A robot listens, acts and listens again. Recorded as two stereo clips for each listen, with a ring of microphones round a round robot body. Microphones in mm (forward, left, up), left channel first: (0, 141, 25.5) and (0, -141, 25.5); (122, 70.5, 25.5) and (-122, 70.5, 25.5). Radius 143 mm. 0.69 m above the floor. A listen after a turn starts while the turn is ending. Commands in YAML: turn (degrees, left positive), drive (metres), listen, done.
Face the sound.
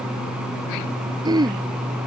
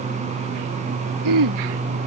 turn: -165
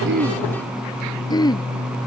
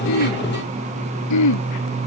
turn: 15
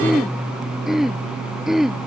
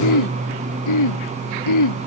done: "Found it: throat clearing, straight ahead."